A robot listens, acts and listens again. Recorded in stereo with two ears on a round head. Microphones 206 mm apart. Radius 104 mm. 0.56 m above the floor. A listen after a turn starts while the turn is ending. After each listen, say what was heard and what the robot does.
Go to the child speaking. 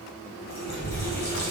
The child speaking: about 55° left or 125° left. Turn 55° left.
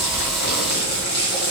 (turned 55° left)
Keep listening.
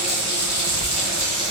Drive 1.0 m forward.
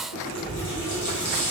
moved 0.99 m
Drive 1.0 m forward.
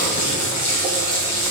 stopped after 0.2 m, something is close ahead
Keep listening.
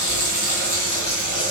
Arrived at the child speaking, straight ahead.